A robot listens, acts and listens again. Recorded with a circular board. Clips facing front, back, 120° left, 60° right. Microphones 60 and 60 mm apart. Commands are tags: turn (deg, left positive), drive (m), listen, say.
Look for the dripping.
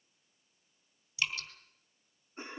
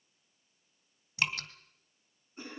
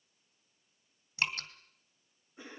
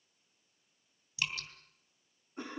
<turn deg="160"/>
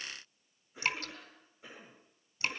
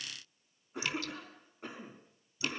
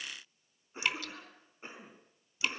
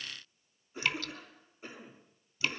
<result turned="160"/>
<turn deg="40"/>
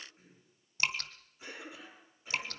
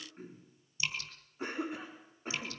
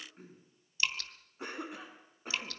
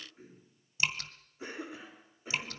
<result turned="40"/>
<say>Found it: dripping, straight ahead, 1 to 2 m away.</say>